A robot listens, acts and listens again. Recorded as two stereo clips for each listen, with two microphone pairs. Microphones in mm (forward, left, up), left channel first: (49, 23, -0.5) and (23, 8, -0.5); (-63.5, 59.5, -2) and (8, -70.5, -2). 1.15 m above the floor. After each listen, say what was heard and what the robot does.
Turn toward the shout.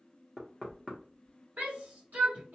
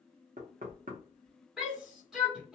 The shout: 150° right. Turn 150° right.
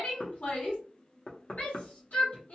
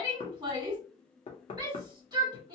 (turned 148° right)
Found it: a shout, straight ahead, 1 to 2 m away.